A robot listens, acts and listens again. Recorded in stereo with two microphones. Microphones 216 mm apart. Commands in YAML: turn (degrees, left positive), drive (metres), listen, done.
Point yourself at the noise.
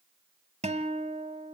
turn: -30
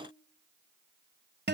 turn: -120
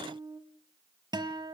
turn: -20
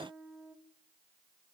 done: "Facing the guitar."